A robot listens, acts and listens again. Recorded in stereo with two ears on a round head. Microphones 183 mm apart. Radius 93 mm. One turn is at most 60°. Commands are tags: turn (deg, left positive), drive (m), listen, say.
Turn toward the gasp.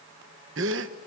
<turn deg="-60"/>
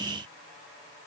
<listen/>
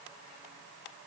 <say>I heard a gasp, but can't make it out now. It was about 5° right or 55° right.</say>